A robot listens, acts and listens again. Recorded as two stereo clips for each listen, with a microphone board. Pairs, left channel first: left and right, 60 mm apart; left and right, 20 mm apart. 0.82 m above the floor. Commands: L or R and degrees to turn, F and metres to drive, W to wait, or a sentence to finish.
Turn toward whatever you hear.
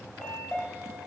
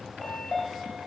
L30
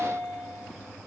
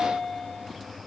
R15
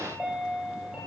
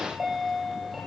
R10
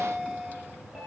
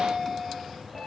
Facing the chime, 2 to 4 m away.